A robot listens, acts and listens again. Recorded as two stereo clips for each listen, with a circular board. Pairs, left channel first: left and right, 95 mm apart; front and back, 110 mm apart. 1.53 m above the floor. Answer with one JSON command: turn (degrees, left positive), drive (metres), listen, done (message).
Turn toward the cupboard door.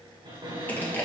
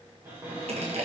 {"turn": -115}
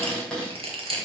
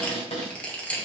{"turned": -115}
{"done": "Facing the cupboard door."}